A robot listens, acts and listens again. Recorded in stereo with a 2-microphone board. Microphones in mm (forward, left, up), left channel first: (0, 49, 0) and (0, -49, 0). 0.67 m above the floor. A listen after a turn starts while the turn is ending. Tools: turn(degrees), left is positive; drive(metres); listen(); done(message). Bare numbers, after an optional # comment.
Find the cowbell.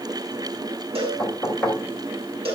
turn(-90)
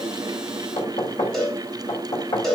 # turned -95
done("Found it: a cowbell, straight ahead, over 4 m away.")